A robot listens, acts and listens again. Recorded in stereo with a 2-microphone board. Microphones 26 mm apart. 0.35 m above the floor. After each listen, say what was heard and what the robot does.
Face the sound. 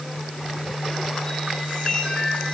The chime: about 25° left or 155° left. Turn 25° left.
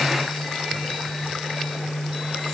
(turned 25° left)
Keep listening.
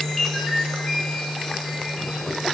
Found it: a chime, straight ahead, over 4 m away.